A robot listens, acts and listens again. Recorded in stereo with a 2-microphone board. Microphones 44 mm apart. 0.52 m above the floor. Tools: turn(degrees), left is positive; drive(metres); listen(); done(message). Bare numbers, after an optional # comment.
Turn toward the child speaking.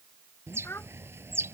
# The child speaking: about 65° left or 115° left.
turn(65)
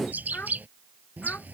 # So it is at 40° left.
turn(40)
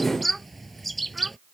listen()
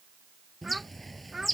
done("Found it: a child speaking, straight ahead.")